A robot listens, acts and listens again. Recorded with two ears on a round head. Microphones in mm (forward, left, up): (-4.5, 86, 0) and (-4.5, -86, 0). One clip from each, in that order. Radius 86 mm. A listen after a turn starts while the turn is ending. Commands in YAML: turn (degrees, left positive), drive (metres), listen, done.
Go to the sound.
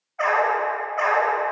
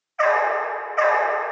turn: -65
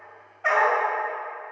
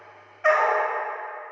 turn: -45
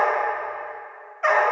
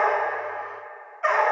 turn: 15
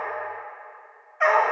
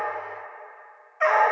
drive: 1.0
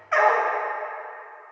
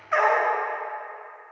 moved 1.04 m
drive: 1.0
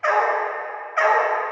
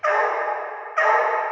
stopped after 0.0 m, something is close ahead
done: "I am next to the dog barking."